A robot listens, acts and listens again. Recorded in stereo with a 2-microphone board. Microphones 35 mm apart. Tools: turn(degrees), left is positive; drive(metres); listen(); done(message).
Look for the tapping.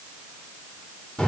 listen()
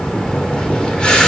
listen()
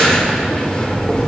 done("I can't make out tapping, only breathing.")